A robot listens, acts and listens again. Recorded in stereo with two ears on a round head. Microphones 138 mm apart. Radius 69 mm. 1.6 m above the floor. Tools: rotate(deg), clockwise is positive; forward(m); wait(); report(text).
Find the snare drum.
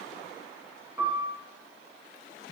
wait()
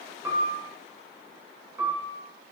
wait()
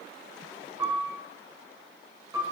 report("I can't make out a snare drum to turn to.")